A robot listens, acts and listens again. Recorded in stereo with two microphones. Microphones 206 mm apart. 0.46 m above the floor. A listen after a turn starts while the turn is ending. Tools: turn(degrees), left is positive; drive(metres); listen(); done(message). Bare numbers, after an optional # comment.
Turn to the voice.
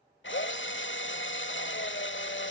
listen()
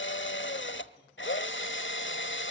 listen()
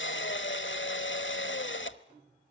done("I can't make out anyone speaking, only a drill.")